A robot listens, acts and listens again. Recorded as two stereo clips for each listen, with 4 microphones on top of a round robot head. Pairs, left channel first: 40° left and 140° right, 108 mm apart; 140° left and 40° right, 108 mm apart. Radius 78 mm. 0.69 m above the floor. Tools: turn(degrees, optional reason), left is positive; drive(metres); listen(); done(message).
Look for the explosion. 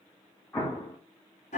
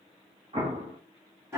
turn(degrees=-35, reason="The explosion: 35° right.")
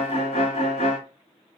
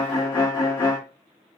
done("Facing where the explosion came from. I can't hear it now.")